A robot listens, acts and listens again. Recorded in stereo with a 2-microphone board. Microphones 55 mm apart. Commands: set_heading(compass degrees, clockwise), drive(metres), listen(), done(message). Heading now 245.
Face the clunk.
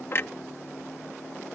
set_heading(200)
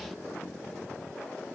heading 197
listen()
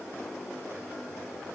done("I heard a clunk, but can't make it out now. It was about 5° right or 90° left.")